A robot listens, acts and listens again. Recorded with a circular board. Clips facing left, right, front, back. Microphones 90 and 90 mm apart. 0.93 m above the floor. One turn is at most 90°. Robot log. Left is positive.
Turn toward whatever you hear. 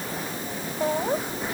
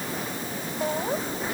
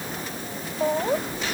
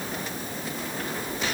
note: The laughter: 10° left.
cmd yaw +10
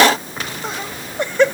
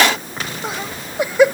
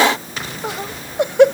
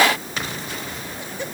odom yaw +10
note: The laughter is now 10° right.
cmd yaw -10
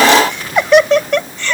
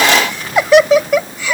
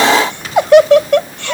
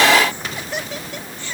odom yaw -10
note: The laughter is now 10° right.
cmd yaw -10
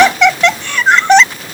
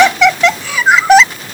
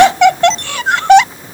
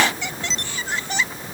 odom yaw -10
end: Facing the laughter.